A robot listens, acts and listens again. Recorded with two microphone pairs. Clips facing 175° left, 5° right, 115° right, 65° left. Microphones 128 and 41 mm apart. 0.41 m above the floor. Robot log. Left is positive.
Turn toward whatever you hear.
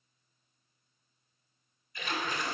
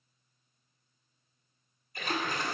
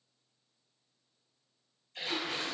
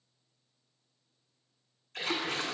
note: The splash: 40° left.
cmd yaw +40
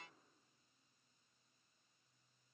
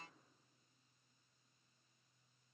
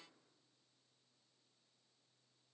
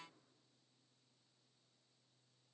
end: Facing where the splash came from. I can't hear it now.